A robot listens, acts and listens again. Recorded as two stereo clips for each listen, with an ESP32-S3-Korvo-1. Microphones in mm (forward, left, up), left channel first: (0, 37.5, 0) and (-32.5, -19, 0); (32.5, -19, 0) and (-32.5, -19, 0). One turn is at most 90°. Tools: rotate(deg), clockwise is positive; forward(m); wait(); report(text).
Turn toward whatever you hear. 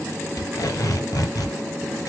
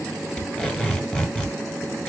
rotate(-70)
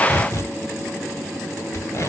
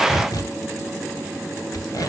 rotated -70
rotate(-15)
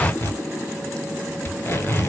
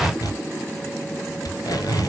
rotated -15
report("Found it: tape being pulled, straight ahead, 1 to 2 m away.")